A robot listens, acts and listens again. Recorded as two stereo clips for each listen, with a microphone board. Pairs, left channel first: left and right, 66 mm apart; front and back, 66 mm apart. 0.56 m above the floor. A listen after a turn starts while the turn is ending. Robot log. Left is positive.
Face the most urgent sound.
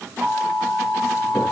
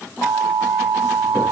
note: The alarm: 30° right.
cmd yaw -30
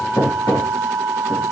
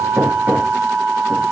note: The alarm is now 10° left.
cmd yaw +10
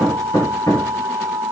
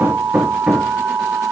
end: Facing the alarm, 2 to 4 m away.